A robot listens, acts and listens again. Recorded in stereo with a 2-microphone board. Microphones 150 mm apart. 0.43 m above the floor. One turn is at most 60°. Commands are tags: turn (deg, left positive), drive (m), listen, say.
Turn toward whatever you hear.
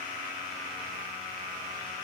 <listen/>
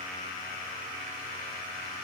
<listen/>
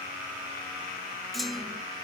<turn deg="30"/>
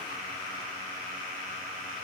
<listen/>
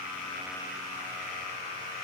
<say>I heard a clunk, but can't make it out now. It was about 30° right or 150° left.</say>